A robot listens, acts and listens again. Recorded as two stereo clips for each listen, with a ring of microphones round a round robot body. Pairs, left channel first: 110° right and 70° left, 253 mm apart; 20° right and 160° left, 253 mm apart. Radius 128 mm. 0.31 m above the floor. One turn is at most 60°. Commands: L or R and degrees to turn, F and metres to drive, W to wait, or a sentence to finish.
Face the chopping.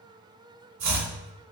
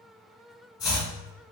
L50
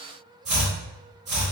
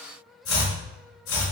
Facing the chopping.